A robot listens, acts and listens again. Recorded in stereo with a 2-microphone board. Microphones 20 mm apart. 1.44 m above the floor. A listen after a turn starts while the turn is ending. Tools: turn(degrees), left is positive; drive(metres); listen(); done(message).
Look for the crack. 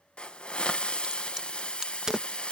turn(degrees=-30)
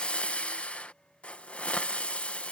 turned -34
listen()
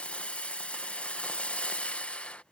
done("I heard a crack, but can't make it out now. It was about 5° left or 115° right.")